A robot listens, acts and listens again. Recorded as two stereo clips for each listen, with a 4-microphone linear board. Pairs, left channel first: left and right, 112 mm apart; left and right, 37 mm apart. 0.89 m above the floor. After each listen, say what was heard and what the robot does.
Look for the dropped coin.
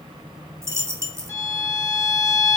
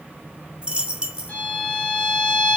The dropped coin: about 25° right or 155° right. Turn 25° right.
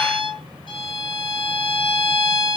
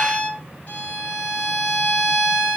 Keep listening.
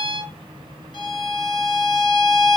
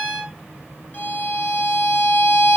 I heard a dropped coin, but can't make it out now. It was about straight ahead or 130° right.